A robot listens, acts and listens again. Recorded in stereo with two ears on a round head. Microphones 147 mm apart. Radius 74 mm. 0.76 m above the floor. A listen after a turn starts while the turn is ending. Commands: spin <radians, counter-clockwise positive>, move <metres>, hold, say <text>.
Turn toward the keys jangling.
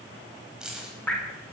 spin -0.52
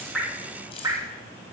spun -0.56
spin 0.61
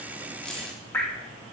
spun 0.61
hold
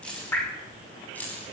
spin 0.17
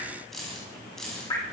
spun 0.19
say Found it: keys jangling, straight ahead.